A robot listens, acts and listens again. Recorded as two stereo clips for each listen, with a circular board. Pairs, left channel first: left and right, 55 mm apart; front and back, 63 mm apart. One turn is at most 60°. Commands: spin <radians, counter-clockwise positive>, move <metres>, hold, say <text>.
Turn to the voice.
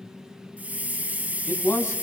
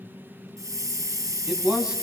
spin 1.05
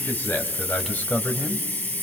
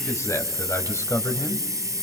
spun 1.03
spin 0.52
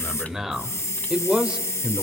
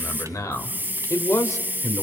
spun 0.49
spin -0.52
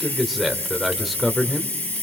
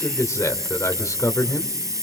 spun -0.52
say Found it: a man speaking, straight ahead, 1 to 2 m away.